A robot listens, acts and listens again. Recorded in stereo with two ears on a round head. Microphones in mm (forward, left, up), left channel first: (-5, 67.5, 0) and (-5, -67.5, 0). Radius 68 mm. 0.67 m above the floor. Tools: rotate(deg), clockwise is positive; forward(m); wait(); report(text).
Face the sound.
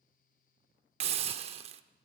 rotate(45)
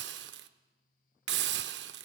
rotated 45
rotate(95)
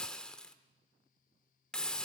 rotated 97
report("Found it: a hiss, straight ahead, under 1 m away.")